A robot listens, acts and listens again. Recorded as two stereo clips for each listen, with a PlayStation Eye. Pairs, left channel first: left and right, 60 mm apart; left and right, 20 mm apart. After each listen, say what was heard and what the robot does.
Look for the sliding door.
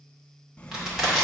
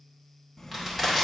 The sliding door: about 20° left or 160° left. Turn 20° left.
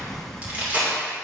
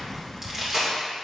Facing the sliding door, under 1 m away.